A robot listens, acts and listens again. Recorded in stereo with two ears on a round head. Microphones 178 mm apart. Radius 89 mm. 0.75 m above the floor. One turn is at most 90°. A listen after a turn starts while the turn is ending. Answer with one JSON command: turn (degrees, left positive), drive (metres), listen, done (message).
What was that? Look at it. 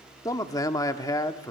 {"turn": 20}
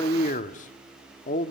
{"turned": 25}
{"turn": 90}
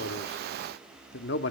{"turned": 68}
{"turn": 70}
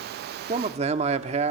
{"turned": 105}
{"turn": -35}
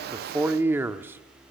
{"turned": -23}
{"turn": -10}
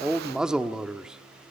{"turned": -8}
{"done": "Found it: a man speaking, straight ahead, 1 to 2 m away."}